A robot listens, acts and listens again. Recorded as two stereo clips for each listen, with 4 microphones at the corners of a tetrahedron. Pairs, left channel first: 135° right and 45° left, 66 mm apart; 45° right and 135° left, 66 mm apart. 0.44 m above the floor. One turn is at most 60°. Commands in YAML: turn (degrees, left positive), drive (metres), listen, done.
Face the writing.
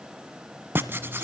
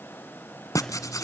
turn: -10
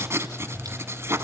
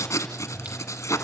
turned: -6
done: "Facing the writing, 1 to 2 m away."